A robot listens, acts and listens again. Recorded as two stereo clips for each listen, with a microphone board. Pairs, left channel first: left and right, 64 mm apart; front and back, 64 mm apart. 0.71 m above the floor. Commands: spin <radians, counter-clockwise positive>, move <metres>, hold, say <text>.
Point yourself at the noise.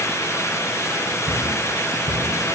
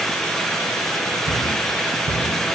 spin -0.52
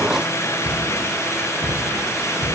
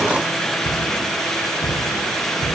spin -0.26
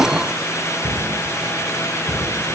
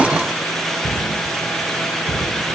say Found it: a cupboard door, straight ahead.